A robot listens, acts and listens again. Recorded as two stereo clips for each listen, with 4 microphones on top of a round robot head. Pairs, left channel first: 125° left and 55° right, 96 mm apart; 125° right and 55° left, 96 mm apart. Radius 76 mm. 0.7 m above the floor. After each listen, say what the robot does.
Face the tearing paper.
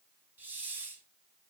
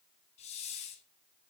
Keep listening.
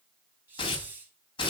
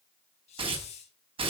Turn 85° left.
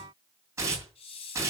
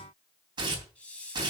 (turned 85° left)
Found it: tearing paper, straight ahead, 2 to 4 m away.